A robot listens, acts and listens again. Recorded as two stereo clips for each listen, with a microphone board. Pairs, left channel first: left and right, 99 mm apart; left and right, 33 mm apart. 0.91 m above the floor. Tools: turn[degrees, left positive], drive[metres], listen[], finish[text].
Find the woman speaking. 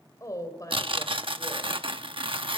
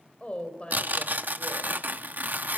Thought: The woman speaking: about 30° left or 150° left.
Action: turn[30]
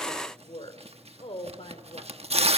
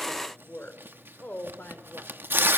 Thought: So it is at 110° left.
Action: turn[110]
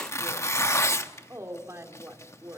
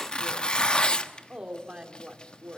Thought: The woman speaking is now 25° right.
Action: turn[-25]
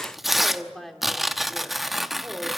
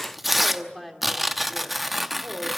Action: finish[Found it: a woman speaking, straight ahead.]